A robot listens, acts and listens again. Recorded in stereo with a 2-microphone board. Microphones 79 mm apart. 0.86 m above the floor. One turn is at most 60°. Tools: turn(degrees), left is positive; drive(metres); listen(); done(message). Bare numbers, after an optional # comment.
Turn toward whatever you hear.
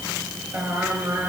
# The singing: about 25° right or 155° right.
turn(-25)
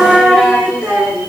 turn(-30)
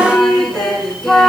done("Found it: singing, straight ahead.")